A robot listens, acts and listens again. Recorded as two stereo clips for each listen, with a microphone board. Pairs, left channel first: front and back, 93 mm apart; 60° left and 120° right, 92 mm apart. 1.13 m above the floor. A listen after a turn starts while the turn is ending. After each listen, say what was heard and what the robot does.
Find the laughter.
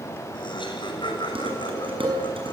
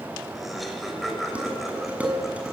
The laughter: 30° right. Turn 30° right.
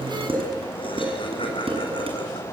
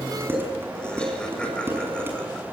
The laughter is now 20° right. Turn 20° right.
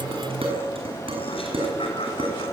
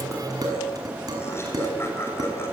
Keep listening.
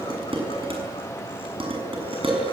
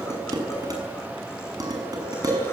Keep listening.
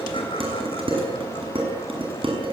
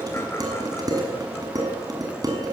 I heard laughter from this way, but can't make it out now.